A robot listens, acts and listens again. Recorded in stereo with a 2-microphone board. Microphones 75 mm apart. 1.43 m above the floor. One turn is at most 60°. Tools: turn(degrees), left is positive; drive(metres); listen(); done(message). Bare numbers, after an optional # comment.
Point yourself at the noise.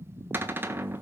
# The cupboard door: about 30° right or 150° right.
turn(-30)
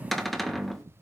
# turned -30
done("Facing the cupboard door, 1 to 2 m away.")